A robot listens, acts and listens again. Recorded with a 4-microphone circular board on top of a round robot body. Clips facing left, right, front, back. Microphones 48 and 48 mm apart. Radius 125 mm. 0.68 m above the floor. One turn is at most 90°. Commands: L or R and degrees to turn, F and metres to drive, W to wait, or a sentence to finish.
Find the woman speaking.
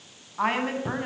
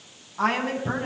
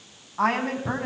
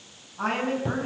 L10
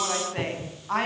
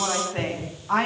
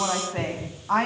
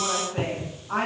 Found it: a woman speaking, straight ahead, over 4 m away.